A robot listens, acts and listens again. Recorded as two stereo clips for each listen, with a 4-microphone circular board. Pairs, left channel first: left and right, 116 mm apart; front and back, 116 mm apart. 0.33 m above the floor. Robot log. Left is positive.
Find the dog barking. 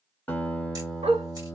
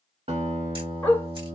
note: The dog barking: 75° right.
cmd yaw -75
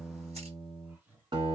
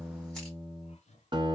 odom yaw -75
cmd idle
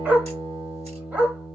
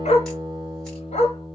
note: The dog barking is now 15° right.
cmd yaw -15
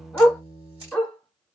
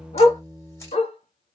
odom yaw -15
end: Found it: a dog barking, straight ahead, 1 to 2 m away.